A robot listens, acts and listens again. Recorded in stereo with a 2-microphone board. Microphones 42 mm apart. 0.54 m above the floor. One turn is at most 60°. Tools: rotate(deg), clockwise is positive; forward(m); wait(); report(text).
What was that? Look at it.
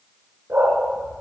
rotate(60)
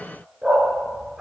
rotate(10)
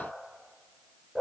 report("Found it: a dog barking, straight ahead.")